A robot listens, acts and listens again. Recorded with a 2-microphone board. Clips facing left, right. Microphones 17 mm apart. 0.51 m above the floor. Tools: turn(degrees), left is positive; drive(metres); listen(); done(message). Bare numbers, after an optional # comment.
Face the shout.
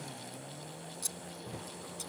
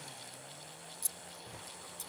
listen()
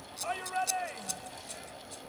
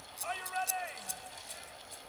turn(30)
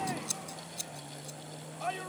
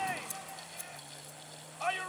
# So it is at 30° right.
turn(-30)
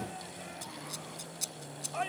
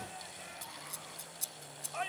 done("Facing the shout.")